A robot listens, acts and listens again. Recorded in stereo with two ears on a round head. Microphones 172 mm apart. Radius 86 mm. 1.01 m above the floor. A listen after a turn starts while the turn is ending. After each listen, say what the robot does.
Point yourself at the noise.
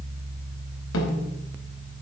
Turn 90° left.
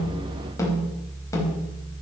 Turn 15° left.
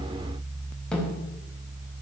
Facing the snare drum.